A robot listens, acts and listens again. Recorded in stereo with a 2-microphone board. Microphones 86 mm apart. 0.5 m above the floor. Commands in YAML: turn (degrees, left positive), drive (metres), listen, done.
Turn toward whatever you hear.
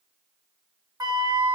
turn: -45
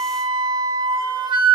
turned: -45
turn: -85
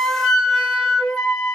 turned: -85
turn: 15
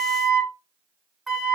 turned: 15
done: "Facing the flute."